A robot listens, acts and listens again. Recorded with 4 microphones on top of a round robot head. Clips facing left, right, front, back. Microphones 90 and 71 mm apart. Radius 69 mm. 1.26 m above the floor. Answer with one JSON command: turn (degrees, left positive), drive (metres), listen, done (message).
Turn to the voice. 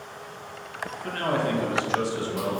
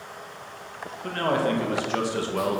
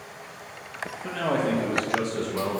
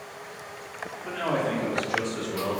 {"turn": -70}
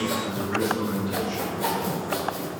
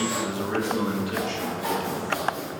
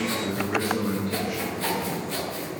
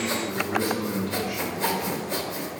{"turn": -65}
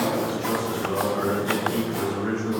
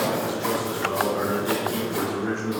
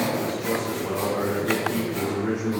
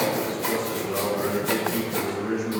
{"turn": -15}
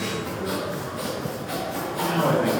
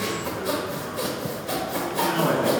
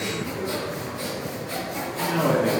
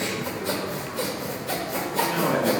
{"done": "Found it: a man speaking, straight ahead."}